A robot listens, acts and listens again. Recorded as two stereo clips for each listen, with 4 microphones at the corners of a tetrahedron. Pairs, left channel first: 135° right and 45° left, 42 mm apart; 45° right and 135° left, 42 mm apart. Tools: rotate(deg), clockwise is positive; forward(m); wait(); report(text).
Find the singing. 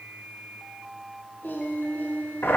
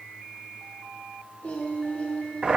rotate(95)
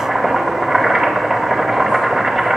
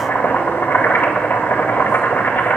wait()
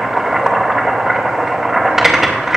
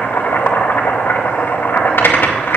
wait()
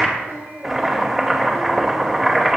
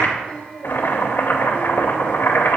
rotate(-25)
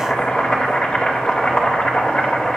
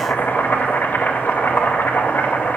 wait()
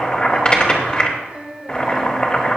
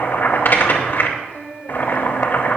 report("Facing the singing, 2 to 4 m away.")